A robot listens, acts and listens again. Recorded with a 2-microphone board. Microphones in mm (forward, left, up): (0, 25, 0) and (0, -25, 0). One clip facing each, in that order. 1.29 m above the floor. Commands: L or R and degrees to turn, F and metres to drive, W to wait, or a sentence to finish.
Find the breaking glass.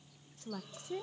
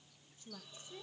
W
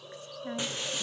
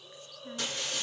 L15
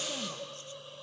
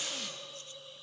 W
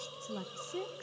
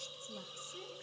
I heard breaking glass, but can't make it out now. It was about straight ahead or 150° left.